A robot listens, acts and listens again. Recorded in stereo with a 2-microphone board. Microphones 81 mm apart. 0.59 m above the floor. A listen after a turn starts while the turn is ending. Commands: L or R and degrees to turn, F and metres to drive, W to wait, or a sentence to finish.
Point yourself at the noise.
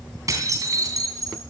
R45
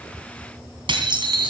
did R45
R85
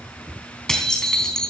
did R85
L10
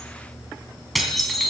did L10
Found it: dishes clattering, straight ahead.